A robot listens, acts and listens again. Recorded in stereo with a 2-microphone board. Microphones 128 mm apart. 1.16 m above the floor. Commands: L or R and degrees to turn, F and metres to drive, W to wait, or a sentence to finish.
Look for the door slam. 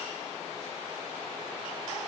W
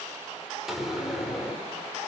R30
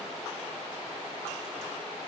W
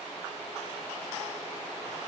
I heard a door slam, but can't make it out now. It was about 25° left or 145° right.